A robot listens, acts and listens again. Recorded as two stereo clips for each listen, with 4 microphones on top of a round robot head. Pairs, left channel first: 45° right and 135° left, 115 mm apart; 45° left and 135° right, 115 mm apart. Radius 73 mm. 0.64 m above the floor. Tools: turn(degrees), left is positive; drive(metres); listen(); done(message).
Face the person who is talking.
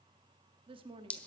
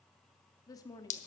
turn(degrees=100)
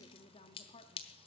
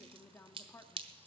turn(degrees=-25)
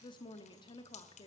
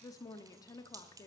done("Facing the woman speaking.")